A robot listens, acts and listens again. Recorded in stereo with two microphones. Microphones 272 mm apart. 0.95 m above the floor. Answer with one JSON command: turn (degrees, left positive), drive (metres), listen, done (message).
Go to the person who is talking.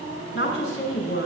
{"turn": 45}
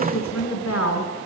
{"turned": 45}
{"turn": 95}
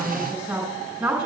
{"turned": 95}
{"drive": 1.0}
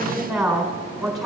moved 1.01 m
{"drive": 1.0}
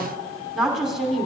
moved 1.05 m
{"drive": 1.0}
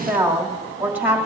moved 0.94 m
{"drive": 1.0}
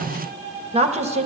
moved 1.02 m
{"turn": -25}
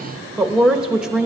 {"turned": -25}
{"drive": 1.0}
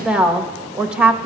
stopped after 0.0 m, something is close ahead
{"done": "I am next to the woman speaking."}